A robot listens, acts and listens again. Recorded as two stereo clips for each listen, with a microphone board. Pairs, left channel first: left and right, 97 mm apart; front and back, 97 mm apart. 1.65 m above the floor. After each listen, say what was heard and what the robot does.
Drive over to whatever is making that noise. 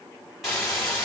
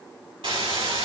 The hiss: straight behind. Turn 180° left.
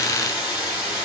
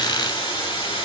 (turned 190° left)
The hiss is now 10° right. Turn 10° right.
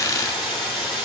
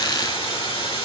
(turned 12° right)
Drive 1.0 m forward.
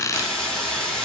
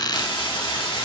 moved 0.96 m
The hiss is now 10° left. Turn 10° left.
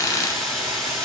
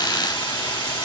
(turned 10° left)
Drive 1.0 m forward.
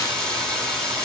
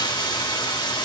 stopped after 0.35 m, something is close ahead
I am next to the hiss.